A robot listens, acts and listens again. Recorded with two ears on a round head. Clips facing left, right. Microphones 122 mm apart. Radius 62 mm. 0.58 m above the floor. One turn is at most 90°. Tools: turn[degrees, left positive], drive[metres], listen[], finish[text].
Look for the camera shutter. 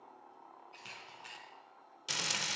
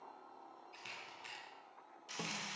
Action: turn[30]
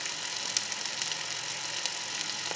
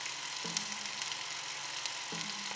Action: listen[]
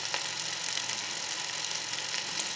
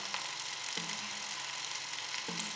Action: listen[]
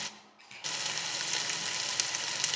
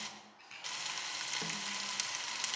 Thought: So it is at 150° left.
Action: turn[90]
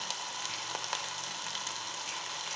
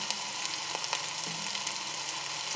Thought: Nothing new. It was at 60° left.
Action: turn[60]
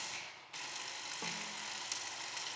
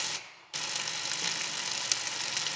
Thought: The camera shutter is now 20° left.
Action: turn[20]
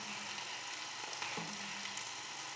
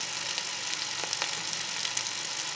Action: listen[]
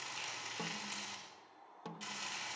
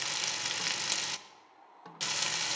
Action: listen[]
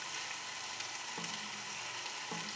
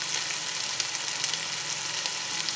Action: finish[I heard a camera shutter from this way, but can't make it out now.]